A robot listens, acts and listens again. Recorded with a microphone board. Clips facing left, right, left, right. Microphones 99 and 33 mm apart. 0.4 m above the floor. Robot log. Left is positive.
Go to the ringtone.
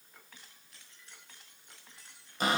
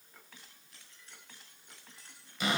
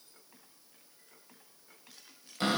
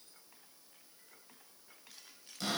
cmd idle
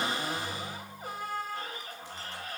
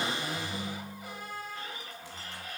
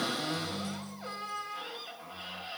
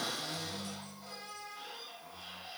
cmd yaw -30
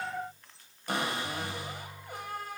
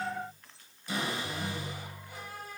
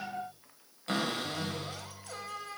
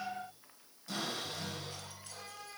note: So it is at 15° left.
cmd yaw +15
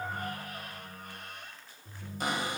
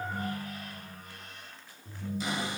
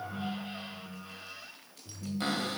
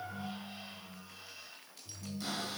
cmd fwd 1.0
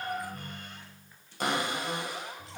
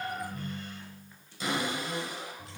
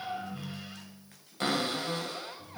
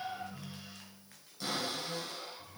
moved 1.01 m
note: The ringtone is now 10° left.
cmd yaw +10
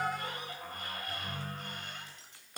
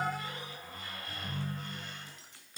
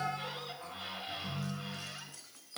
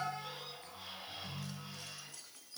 cmd fwd 1.0
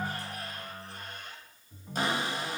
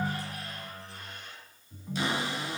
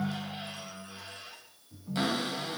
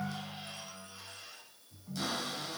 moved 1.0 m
cmd fwd 1.0
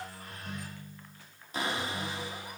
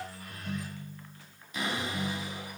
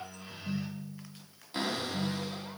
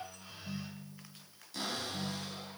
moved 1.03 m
cmd fwd 1.0
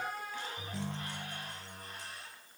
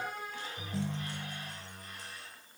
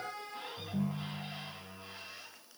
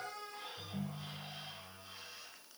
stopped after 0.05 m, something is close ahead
end: Arrived at the ringtone, straight ahead.